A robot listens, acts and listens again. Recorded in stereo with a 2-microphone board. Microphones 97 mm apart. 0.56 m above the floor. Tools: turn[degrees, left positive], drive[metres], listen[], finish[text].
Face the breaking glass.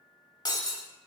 Thought: The breaking glass: about 45° left or 135° left.
Action: turn[45]
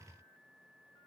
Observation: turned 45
Action: listen[]
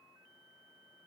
Action: finish[I heard breaking glass, but can't make it out now. It was about straight ahead or 90° left.]